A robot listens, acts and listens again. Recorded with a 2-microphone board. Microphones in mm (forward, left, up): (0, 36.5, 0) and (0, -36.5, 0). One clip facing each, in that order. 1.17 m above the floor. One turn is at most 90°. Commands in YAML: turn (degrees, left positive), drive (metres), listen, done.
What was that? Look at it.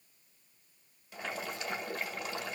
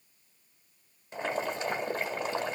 turn: -30
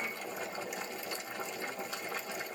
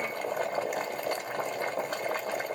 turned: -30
turn: -90
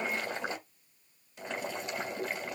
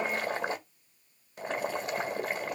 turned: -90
turn: -50
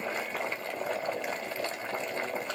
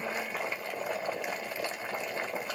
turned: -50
turn: -10
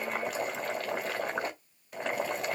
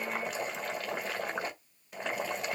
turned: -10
done: "Found it: boiling, straight ahead, 1 to 2 m away."